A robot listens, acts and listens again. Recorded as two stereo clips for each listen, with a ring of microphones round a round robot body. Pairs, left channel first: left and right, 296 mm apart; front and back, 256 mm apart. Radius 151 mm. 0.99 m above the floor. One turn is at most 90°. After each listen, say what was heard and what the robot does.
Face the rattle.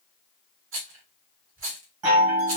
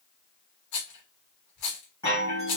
The rattle: 40° right. Turn 40° right.
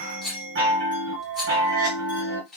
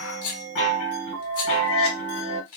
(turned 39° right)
Found it: a rattle, straight ahead, 1 to 2 m away.